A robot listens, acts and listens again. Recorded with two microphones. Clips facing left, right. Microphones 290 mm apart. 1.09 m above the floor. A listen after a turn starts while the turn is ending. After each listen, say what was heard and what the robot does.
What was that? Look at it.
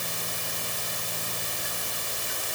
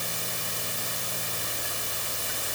Keep listening.
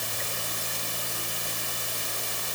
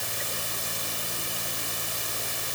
Keep listening.
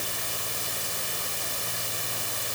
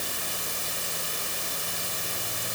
I can't make out anything to turn to.